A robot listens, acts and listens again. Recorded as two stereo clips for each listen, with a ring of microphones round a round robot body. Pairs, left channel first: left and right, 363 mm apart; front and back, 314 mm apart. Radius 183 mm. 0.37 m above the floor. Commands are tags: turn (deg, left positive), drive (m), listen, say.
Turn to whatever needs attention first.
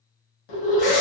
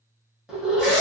<turn deg="95"/>
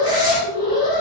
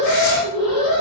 <turn deg="-15"/>
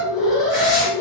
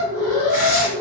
<say>Facing the alarm.</say>